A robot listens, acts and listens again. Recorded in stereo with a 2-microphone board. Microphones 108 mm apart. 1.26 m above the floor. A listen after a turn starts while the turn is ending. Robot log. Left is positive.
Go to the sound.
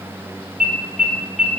cmd yaw -30
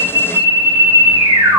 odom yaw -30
note: So it is at 145° right.
cmd yaw -145
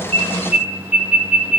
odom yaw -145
note: The alarm is now 15° right.
cmd yaw -15
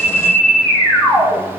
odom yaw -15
cmd fwd 1.0
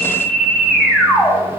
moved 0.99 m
cmd fwd 1.0
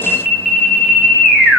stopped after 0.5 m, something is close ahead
end: Arrived at the alarm, straight ahead.